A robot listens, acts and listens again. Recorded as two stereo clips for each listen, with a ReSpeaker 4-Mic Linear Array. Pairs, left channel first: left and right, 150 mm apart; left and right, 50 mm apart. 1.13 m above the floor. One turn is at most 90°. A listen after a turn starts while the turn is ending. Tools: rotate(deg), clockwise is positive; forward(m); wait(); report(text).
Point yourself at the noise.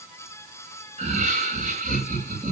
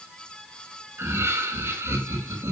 rotate(55)
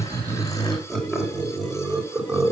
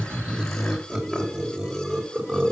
report("Facing the laughter.")